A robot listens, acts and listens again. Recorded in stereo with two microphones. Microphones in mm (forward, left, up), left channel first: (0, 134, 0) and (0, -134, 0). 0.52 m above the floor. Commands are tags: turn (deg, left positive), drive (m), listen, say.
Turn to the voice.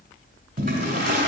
<listen/>
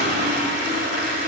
<listen/>
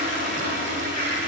<say>I can't make out anyone speaking to turn to.</say>